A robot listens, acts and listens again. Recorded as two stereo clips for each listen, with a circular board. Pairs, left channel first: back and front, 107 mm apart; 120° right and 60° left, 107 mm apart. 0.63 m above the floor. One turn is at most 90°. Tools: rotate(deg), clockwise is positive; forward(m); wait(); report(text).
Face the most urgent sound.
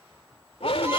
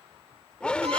rotate(-90)
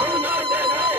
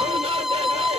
rotate(-70)
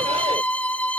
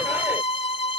wait()
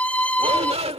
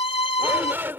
rotate(10)
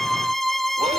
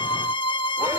wait()
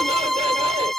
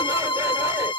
wait()
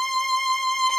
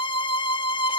report("Facing where the shout came from. I can't hear it now.")